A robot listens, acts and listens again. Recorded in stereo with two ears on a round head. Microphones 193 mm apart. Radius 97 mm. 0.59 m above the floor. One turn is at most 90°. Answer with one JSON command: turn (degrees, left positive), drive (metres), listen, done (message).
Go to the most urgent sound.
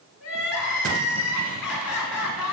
{"turn": 90}
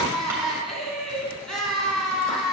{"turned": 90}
{"drive": 1.0}
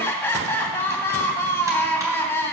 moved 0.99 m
{"turn": 10}
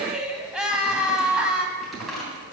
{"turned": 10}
{"drive": 1.0}
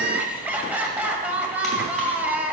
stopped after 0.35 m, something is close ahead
{"done": "I am next to the crying."}